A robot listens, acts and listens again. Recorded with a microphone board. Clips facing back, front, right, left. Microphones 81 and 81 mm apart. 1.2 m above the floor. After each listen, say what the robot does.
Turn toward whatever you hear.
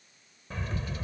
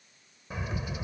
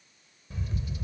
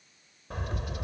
Turn 80° left.
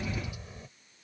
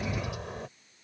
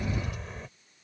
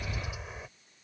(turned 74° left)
Found it: a bird, straight ahead.